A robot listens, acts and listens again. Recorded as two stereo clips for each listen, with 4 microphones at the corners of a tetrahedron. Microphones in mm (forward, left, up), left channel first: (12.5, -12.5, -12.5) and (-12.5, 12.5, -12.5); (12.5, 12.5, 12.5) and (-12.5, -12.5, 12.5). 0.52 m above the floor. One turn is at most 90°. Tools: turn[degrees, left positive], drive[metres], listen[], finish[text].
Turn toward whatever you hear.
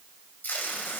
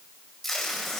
Thought: The tape being pulled: 40° right.
Action: turn[-40]
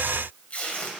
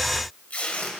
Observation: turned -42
Action: finish[Facing the tape being pulled.]